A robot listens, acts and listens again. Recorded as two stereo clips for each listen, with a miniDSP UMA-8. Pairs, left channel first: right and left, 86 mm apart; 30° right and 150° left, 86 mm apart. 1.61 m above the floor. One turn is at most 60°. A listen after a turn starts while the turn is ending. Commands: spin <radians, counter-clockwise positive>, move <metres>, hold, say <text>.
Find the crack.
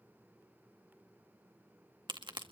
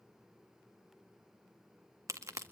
spin 1.05
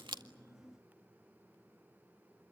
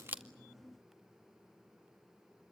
spin 0.70
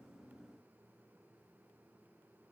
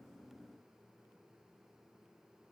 say Facing where the crack came from. I can't hear it now.